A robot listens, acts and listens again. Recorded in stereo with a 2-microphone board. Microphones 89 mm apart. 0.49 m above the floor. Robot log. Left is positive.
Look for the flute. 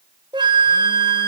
note: The flute: about 55° right or 125° right.
cmd yaw -55
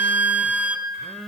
note: So it is at 20° right.
cmd yaw -20
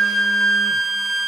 end: Found it: a flute, straight ahead.